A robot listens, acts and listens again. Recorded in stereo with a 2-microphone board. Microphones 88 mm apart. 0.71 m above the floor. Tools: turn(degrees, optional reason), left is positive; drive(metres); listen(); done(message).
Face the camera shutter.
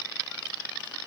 listen()
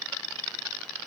listen()
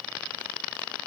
done("I can't make out a camera shutter.")